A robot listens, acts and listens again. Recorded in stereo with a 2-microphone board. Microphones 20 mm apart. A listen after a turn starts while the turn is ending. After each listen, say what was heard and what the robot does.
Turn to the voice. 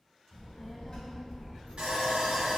The child speaking: about 25° left or 155° left. Turn 25° left.
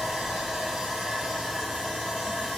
Keep listening.
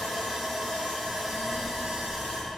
Facing the child speaking.